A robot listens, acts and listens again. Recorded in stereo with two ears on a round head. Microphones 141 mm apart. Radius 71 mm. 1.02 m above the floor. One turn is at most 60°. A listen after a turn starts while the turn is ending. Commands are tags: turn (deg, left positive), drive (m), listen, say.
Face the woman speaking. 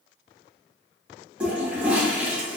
<listen/>
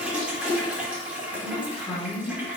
<turn deg="25"/>
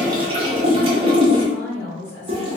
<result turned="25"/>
<turn deg="35"/>
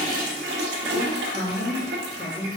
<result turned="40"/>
<turn deg="60"/>
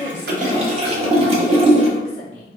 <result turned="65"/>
<turn deg="40"/>
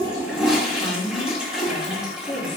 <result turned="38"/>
<say>Found it: a woman speaking, straight ahead, 2 to 4 m away.</say>